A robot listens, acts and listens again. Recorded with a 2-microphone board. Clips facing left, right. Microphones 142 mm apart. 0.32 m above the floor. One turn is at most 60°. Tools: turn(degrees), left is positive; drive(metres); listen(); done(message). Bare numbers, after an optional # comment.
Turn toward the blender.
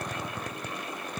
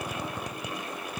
listen()
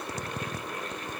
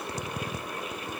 listen()
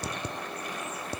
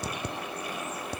done("I can't make out a blender to turn to.")